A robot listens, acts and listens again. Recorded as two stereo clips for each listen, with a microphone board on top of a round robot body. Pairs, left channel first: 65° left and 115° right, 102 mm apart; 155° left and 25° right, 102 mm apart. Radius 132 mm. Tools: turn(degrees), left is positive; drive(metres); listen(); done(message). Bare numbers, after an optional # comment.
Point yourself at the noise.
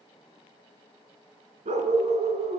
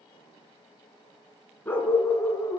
# The dog barking: 135° right.
turn(-135)
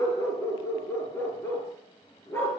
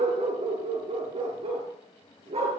done("Facing the dog barking, 2 to 4 m away.")